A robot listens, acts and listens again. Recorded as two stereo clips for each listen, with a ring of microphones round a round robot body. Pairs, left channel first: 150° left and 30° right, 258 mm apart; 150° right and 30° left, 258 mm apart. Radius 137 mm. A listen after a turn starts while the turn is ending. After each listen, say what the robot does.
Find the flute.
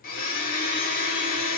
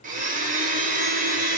Keep listening.
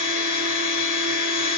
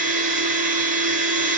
Keep listening.
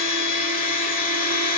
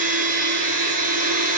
I can't make out a flute to turn to.